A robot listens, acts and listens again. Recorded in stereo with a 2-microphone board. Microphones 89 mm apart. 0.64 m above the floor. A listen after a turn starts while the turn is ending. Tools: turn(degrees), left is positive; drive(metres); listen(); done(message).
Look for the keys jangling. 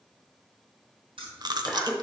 turn(degrees=-90)
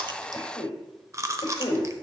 listen()
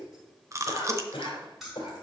done("Facing the keys jangling, 2 to 4 m away.")